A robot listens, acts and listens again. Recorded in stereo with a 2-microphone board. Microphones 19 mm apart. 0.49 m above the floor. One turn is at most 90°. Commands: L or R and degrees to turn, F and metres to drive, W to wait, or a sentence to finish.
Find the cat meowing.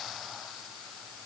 W
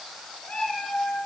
L90
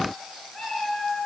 Facing the cat meowing.